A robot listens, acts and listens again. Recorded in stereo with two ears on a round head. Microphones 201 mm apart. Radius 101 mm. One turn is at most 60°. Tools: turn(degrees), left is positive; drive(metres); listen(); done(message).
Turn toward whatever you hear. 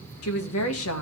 turn(degrees=60)
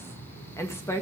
turn(degrees=15)
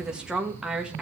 done("Found it: a woman speaking, straight ahead, 1 to 2 m away.")